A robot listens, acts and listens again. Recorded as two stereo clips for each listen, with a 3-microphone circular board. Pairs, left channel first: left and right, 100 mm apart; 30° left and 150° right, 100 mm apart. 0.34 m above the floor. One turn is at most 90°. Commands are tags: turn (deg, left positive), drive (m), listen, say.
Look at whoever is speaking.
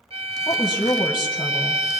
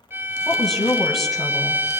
<turn deg="90"/>
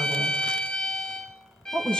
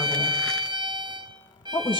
<turn deg="10"/>
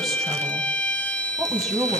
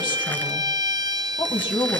<say>Facing the woman speaking.</say>